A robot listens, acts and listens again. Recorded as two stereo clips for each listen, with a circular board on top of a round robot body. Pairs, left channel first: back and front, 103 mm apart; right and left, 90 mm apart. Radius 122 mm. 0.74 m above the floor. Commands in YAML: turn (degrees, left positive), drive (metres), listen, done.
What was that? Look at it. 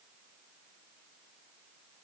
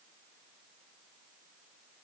listen: true
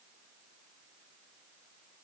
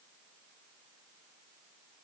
listen: true
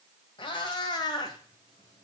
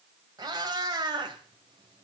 turn: 130
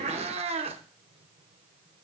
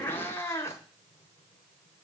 turn: -25
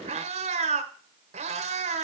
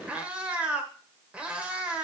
turn: 10
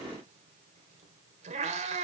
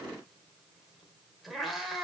done: "Found it: a cat meowing, straight ahead."